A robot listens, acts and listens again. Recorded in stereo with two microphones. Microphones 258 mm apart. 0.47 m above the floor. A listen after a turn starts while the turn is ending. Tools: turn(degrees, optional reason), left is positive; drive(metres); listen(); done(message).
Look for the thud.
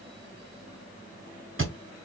turn(degrees=-50, reason="The thud: about 50° right or 130° right.")
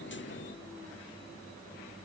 listen()
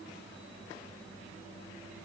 done("I heard a thud, but can't make it out now. It was about straight ahead or 80° right.")